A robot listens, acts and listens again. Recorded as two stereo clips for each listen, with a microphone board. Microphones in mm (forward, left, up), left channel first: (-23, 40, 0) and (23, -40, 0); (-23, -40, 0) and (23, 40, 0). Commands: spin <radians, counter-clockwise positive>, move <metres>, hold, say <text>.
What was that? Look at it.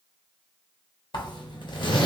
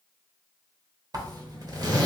spin 1.75
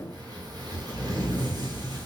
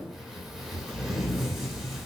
spin -0.44
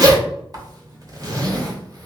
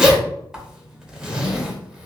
spin -0.35
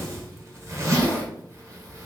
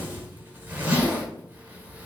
say Found it: a zipper, straight ahead, under 1 m away.